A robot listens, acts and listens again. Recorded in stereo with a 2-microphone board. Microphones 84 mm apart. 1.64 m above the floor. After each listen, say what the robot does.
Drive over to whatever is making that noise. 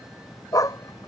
Turn 45° left.
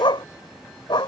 Turn 85° left.
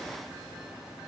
Keep listening.
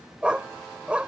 Turn 15° right.
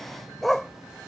Drive 1.0 m forward.
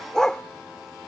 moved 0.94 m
Turn 10° left.
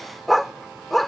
Drive 1.0 m forward.
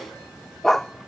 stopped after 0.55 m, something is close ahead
I am next to the dog barking.